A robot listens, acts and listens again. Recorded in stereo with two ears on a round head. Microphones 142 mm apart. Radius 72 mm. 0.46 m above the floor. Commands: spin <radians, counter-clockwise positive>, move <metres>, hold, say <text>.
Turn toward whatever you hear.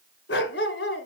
spin 1.31
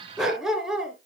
say Found it: a dog barking, straight ahead.